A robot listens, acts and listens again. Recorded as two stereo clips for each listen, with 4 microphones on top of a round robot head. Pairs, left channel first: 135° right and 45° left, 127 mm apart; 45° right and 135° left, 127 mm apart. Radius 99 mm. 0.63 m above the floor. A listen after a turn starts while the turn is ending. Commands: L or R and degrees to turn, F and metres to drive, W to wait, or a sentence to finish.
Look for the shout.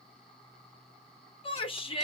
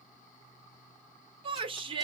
L180
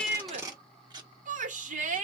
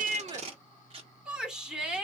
L50
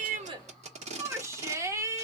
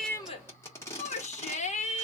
R25
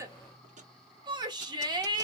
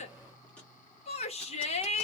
R10
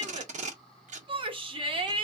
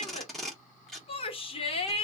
Found it: a shout, straight ahead.